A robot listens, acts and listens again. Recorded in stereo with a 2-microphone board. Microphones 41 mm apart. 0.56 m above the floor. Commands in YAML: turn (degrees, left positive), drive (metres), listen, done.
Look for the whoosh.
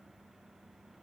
listen: true
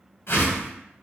turn: 65
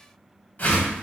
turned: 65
turn: 45
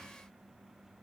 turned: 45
listen: true
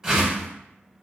turn: -15
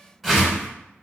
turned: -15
done: "Facing the whoosh, under 1 m away."